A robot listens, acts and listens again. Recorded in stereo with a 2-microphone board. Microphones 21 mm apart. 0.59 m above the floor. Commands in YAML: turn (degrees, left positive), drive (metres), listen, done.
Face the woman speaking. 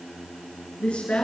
turn: 70
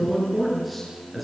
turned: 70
done: "Facing the woman speaking, over 4 m away."